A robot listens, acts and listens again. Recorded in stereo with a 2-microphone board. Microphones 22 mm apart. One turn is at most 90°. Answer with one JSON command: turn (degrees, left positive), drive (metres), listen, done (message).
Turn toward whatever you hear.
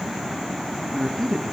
{"turn": 25}
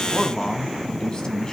{"turn": 40}
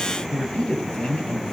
{"turn": 90}
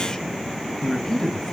{"turn": 25}
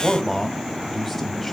{"done": "Found it: a man speaking, straight ahead, 2 to 4 m away."}